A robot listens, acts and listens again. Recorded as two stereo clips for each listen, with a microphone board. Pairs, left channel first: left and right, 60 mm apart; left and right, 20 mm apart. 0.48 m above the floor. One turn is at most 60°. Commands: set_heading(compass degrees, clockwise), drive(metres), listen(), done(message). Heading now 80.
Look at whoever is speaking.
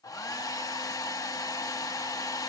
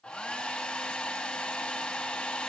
listen()
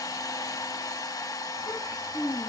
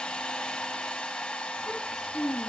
set_heading(20)
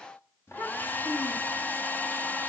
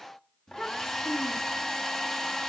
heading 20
set_heading(335)
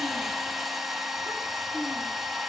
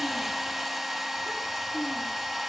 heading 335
listen()
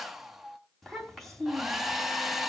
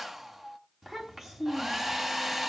done("Found it: a child speaking, straight ahead, 2 to 4 m away.")